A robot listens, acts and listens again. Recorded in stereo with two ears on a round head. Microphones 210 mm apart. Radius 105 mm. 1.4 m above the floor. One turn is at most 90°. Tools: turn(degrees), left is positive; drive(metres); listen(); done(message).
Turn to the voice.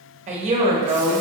turn(degrees=-30)
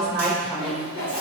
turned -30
done("Facing the woman speaking, 1 to 2 m away.")